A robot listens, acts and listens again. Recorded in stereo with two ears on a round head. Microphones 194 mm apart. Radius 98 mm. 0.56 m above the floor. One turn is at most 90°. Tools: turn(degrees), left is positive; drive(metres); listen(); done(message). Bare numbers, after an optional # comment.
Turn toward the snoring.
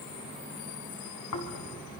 turn(90)
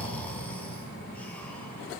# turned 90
done("Facing the snoring, 2 to 4 m away.")